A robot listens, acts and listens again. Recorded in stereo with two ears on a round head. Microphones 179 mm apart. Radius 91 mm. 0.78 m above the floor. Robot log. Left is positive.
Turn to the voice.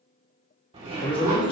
note: The man speaking: about 25° left or 155° left.
cmd yaw +25
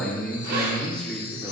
end: Found it: a man speaking, straight ahead, 1 to 2 m away.